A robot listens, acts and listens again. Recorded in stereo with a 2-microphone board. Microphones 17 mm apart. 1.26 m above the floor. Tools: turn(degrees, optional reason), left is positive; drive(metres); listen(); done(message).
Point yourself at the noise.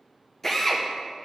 turn(degrees=20, reason="The drill: about 20° left or 160° left.")
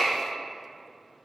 turn(degrees=140, reason="So it is at 140° left.")
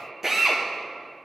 turn(degrees=-25, reason="The drill is now 25° right.")
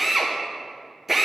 turn(degrees=-15, reason="The drill is now 15° right.")
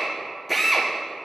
done("Facing the drill, under 1 m away.")